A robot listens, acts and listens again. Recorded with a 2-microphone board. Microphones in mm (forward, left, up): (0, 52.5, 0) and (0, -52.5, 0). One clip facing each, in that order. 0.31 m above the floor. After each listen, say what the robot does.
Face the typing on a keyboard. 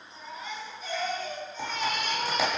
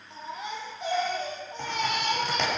Turn 30° left.
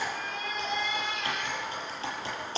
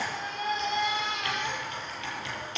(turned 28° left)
Turn 145° left.
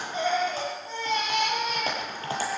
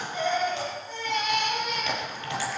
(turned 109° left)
Turn 40° left.
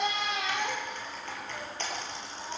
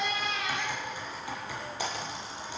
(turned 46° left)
Turn 10° right.
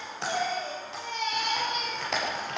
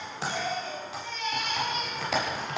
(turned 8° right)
Found it: typing on a keyboard, straight ahead.